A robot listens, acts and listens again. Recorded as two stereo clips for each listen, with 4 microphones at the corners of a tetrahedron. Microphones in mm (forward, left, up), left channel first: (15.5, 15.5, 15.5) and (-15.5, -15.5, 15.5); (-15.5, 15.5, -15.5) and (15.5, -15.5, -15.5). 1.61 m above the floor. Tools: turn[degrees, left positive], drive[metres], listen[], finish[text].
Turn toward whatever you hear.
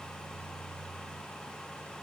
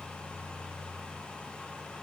Action: listen[]
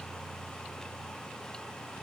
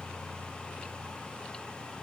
Action: listen[]
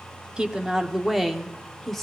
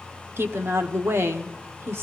Thought: The woman speaking: 40° right.
Action: turn[-40]
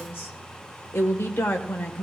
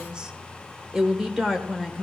Thought: The woman speaking is now 35° left.
Action: turn[35]
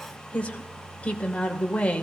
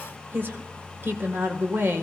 Thought: The woman speaking is now 15° right.
Action: turn[-15]
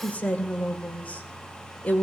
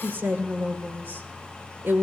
Action: finish[Facing the woman speaking.]